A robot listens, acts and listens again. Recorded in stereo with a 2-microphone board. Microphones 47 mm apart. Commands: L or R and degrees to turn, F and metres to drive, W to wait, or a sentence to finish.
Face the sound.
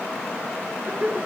R30
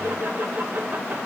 R135
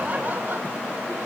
R40
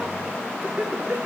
R30
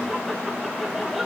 Facing the laughter, 1 to 2 m away.